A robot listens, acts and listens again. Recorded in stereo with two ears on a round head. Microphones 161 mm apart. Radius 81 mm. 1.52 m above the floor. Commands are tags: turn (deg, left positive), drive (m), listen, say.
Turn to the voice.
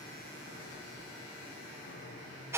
<listen/>
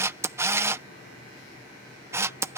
<listen/>
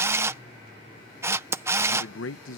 <turn deg="90"/>
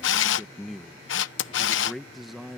<say>Found it: a man speaking, straight ahead.</say>